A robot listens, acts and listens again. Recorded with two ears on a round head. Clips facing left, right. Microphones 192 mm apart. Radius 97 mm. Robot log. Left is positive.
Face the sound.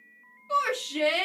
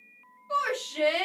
note: The shout: about 35° left or 145° left.
cmd yaw +35
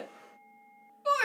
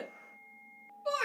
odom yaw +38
note: So it is at 105° left.
cmd yaw +105
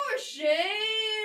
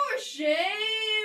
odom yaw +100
end: Facing the shout, under 1 m away.